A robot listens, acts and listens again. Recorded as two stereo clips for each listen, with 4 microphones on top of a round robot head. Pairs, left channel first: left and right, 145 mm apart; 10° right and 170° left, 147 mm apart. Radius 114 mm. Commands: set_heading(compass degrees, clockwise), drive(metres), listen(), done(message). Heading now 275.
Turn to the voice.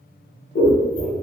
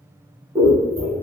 listen()
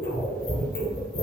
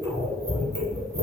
listen()
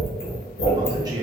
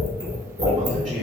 set_heading(65)
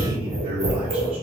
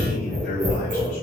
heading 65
set_heading(105)
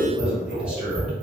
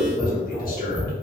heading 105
done("Facing the man speaking.")